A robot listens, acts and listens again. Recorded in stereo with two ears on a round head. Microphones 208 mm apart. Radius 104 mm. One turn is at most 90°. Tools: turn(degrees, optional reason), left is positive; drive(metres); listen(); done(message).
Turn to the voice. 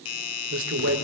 turn(degrees=-55, reason="The man speaking: about 55° right or 125° right.")
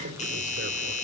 turn(degrees=-55, reason="So it is at 55° right.")
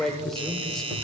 done("Found it: a man speaking, straight ahead, 1 to 2 m away.")